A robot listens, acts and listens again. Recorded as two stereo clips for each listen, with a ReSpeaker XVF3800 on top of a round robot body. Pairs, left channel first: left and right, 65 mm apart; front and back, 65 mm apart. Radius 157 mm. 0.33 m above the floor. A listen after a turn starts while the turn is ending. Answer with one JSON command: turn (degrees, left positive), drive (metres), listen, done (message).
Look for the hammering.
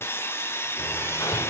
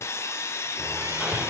{"turn": 105}
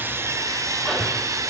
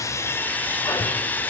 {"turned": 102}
{"done": "Facing the hammering."}